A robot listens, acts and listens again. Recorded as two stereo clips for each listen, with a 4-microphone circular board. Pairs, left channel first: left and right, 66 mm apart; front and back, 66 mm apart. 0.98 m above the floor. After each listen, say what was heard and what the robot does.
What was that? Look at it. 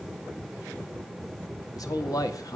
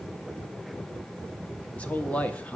The man speaking: 70° left. Turn 70° left.
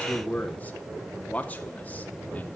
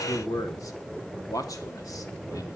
The man speaking is now 25° left. Turn 25° left.
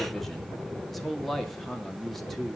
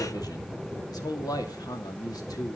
Found it: a man speaking, straight ahead, 2 to 4 m away.